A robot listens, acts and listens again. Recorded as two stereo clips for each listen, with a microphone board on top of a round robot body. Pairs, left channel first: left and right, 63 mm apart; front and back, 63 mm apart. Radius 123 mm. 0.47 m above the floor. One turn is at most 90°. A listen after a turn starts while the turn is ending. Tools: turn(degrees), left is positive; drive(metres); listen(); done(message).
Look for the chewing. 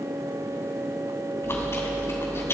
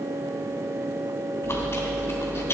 turn(degrees=50)
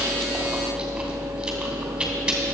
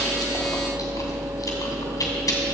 turn(degrees=-10)
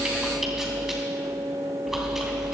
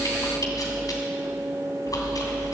done("Facing the chewing, 2 to 4 m away.")